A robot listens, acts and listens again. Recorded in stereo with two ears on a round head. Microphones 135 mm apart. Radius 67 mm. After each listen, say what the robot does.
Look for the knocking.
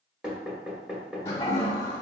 Turn 30° right.
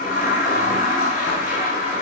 Keep listening.
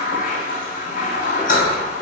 Keep listening.
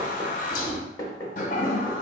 Turn 25° left.
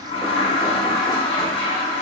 Keep listening.
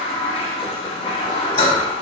Keep listening.
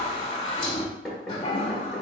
Found it: knocking, straight ahead, 1 to 2 m away.